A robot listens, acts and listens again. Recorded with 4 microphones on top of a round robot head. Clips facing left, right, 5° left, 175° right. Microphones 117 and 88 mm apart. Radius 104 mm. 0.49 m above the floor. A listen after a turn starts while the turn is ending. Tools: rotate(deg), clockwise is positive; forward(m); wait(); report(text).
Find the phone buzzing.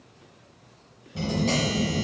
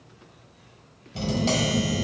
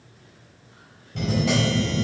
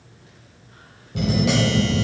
rotate(-180)
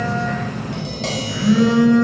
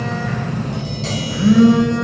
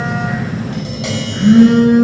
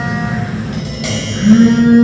rotate(25)
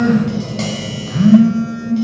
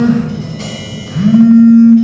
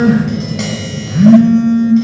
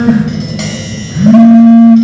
report("Found it: a phone buzzing, straight ahead, under 1 m away.")